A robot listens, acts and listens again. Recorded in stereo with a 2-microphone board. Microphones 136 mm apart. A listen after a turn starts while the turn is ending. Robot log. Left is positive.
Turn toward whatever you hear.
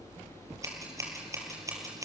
note: The scissors: about 25° right or 155° right.
cmd yaw -25
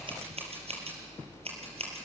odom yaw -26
note: So it is at 135° right.
cmd yaw -135
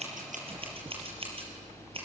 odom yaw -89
note: Nothing new. It was at 45° right.
cmd yaw -45
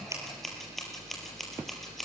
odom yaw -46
end: Found it: scissors, straight ahead, over 4 m away.